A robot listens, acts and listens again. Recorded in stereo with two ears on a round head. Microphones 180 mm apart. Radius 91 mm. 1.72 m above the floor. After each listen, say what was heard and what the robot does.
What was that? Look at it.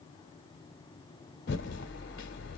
The typing on a keyboard: about 60° left or 120° left. Turn 60° left.
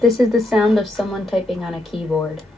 Found it: typing on a keyboard, straight ahead, 1 to 2 m away.